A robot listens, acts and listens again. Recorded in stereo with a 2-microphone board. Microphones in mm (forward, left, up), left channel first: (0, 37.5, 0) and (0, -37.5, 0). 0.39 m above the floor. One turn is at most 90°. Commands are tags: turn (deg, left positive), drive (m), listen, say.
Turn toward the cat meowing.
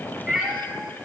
<turn deg="-30"/>
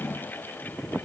<listen/>
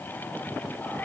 <listen/>
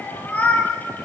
<turn deg="20"/>
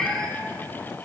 <say>Found it: a cat meowing, straight ahead, under 1 m away.</say>